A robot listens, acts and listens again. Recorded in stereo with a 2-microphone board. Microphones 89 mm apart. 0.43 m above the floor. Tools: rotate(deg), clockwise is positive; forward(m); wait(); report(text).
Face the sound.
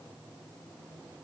wait()
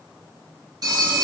rotate(50)
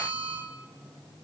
rotate(80)
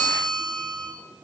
report("Found it: a phone ringing, straight ahead.")